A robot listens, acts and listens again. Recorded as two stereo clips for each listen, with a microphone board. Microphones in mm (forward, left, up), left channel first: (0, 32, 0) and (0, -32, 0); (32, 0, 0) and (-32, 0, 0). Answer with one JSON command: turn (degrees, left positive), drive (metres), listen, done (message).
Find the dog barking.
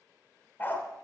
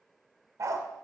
{"turn": 145}
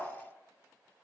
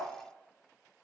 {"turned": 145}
{"turn": 30}
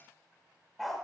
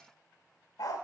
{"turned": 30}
{"done": "Facing the dog barking."}